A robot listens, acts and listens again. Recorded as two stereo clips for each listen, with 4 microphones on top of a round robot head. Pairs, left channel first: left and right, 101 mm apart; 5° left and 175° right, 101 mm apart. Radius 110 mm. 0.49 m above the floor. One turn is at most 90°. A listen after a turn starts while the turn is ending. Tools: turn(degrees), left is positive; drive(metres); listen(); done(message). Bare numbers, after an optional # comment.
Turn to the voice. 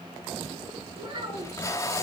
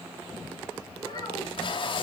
# The child speaking: 50° right.
turn(-50)
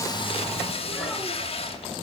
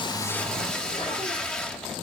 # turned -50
listen()
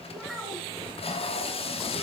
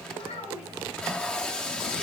done("Facing the child speaking.")